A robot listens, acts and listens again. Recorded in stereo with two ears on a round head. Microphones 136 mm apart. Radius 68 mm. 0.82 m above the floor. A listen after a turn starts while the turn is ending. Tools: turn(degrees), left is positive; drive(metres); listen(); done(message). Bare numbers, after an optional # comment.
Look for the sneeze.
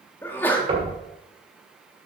turn(30)
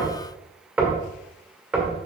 listen()
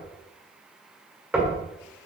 done("I heard a sneeze, but can't make it out now. It was about 20° right or 140° left.")